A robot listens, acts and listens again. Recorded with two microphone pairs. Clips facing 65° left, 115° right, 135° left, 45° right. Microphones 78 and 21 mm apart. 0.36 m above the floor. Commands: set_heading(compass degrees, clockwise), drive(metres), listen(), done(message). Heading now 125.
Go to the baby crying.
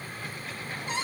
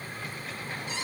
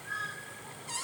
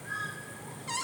listen()
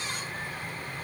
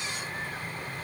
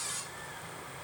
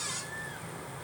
listen()
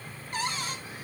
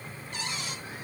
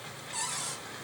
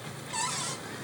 done("I can't make out a baby crying, only a cupboard door.")